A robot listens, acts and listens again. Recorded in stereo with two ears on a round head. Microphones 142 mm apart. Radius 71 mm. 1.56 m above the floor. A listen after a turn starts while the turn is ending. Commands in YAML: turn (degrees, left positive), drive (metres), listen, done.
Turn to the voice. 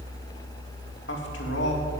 turn: 90
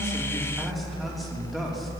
done: "Facing the man speaking."